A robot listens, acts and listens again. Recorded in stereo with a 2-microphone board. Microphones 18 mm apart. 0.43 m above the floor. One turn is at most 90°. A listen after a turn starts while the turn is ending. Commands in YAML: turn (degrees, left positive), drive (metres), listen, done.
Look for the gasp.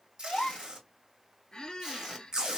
turn: 75
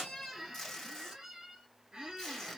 listen: true
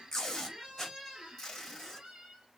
done: "I heard a gasp, but can't make it out now. It was about straight ahead or 30° left."